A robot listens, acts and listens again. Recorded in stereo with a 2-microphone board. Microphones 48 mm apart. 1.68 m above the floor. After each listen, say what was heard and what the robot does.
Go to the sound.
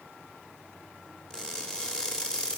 Turn 30° left.
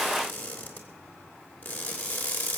So it is at 140° left. Turn 140° left.
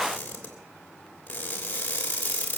The crushing is now 30° left. Turn 30° left.
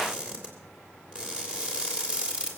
The crushing is now 20° right. Turn 20° right.
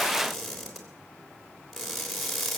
Drive 1.0 m forward.
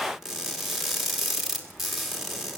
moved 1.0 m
The crushing is now 10° right. Turn 10° right.
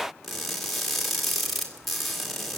Drive 1.0 m forward.
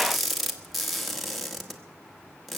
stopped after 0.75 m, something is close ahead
Arrived at the crushing, straight ahead.